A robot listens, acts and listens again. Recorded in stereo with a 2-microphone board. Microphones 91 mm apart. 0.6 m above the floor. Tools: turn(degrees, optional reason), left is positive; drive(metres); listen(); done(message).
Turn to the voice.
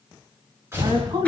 turn(degrees=-70, reason="The woman speaking: about 70° right or 110° right.")
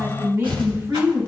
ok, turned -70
turn(degrees=-35, reason="So it is at 35° right.")
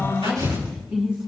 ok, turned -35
turn(degrees=-10, reason="The woman speaking is now 10° right.")
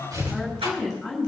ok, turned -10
turn(degrees=-10, reason="The woman speaking is now 10° right.")
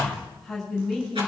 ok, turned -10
done("Facing the woman speaking, over 4 m away.")